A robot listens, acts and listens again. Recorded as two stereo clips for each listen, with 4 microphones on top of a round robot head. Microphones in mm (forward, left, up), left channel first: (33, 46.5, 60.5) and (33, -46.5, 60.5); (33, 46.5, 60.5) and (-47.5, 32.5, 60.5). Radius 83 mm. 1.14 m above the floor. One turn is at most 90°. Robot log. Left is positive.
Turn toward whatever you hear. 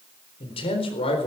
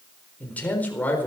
note: The man speaking: 80° left.
cmd yaw +80
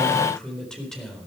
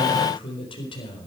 end: Found it: a man speaking, straight ahead.